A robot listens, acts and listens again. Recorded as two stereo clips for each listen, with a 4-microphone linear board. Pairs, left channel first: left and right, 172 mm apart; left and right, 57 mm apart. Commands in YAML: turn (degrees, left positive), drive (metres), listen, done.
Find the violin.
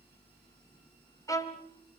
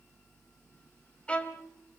turn: 20
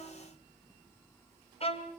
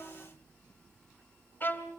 turn: 135
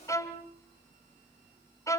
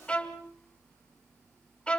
turn: 20
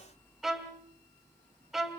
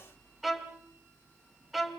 done: "Facing the violin."